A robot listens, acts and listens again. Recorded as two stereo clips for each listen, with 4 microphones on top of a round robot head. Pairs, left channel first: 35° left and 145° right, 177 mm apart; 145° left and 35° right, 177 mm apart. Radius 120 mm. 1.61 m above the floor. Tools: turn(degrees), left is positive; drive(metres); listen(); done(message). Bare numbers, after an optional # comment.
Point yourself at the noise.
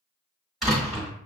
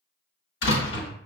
# The door slam: 130° left.
turn(130)
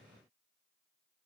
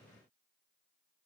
done("Facing where the door slam came from. I can't hear it now.")